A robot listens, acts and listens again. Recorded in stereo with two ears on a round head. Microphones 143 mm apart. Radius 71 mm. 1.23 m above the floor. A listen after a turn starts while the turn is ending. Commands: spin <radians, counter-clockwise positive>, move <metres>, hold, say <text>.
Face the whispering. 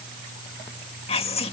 spin 0.61
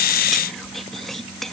say Found it: whispering, straight ahead.